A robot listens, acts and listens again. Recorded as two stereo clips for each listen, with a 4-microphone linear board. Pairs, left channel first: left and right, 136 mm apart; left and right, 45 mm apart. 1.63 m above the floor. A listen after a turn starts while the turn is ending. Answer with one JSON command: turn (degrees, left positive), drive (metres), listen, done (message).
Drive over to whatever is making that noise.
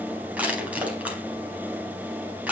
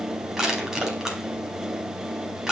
{"turn": -30}
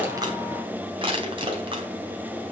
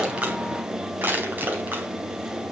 {"turn": -140}
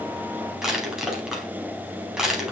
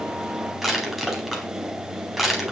{"drive": 1.0}
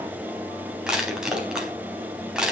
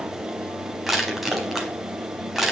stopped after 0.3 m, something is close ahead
{"done": "Something is in my way. I am facing the crushing but have not reached it."}